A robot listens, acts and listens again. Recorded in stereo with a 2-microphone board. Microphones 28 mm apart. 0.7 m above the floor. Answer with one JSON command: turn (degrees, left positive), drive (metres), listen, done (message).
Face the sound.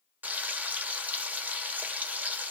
{"turn": -70}
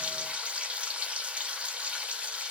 {"turn": -40}
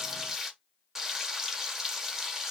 {"turn": -10}
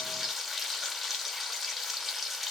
{"done": "Facing the frying."}